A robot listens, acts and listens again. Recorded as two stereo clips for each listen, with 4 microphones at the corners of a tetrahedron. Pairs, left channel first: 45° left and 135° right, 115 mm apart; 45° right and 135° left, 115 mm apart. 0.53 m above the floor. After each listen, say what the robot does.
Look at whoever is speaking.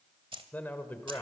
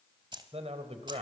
Turn 120° left.
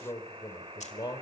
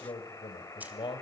Facing the man speaking, 2 to 4 m away.